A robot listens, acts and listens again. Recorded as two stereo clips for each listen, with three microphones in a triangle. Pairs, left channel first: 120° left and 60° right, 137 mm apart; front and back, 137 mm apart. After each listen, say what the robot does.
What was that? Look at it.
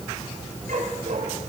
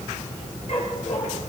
Turn 40° right.
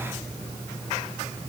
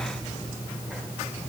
Keep listening.
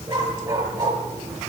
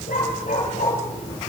Facing the dog barking, over 4 m away.